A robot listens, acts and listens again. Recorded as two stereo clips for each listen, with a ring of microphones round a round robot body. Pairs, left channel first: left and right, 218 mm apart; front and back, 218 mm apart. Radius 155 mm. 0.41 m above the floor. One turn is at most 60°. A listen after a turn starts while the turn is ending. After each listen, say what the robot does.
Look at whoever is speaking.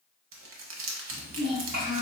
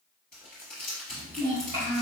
Turn 60° right.
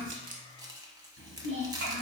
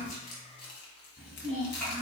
Turn 60° right.
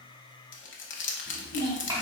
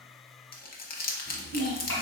Turn 20° right.
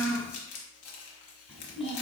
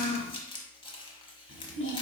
Facing the child speaking, 1 to 2 m away.